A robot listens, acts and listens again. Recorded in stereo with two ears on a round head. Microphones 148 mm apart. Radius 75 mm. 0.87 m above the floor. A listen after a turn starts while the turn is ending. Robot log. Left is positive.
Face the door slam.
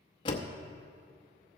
note: The door slam: about 30° left or 150° left.
cmd yaw +30
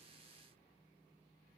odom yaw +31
cmd idle
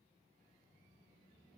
end: I heard a door slam, but can't make it out now. It was about straight ahead or 120° left.